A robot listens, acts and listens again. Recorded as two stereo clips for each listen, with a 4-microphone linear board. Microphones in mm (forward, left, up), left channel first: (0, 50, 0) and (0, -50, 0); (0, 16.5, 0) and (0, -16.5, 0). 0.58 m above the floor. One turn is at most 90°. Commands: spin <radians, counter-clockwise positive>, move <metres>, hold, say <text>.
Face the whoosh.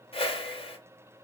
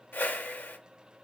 spin 1.13
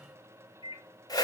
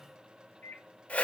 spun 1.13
spin 0.70
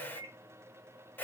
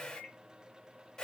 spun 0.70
spin 0.35
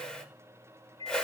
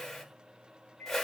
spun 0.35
spin 0.17
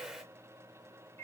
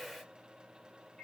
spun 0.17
say Facing the whoosh, under 1 m away.